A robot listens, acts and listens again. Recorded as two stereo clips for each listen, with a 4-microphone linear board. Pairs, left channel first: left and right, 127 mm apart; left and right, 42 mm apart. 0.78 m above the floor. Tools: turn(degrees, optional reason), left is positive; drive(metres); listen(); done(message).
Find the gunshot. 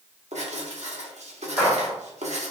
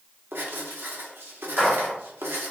turn(degrees=-30)
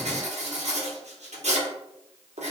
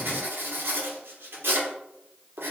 listen()
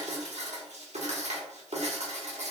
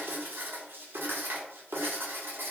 done("I heard a gunshot, but can't make it out now. It was about 20° left or 140° right.")